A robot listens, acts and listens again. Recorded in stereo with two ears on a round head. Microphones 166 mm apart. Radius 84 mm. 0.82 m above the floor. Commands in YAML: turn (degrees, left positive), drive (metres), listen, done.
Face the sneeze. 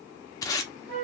listen: true
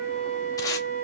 listen: true
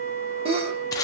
turn: -30
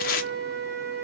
listen: true
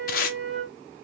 done: "I heard a sneeze, but can't make it out now. It was about straight ahead or 120° right."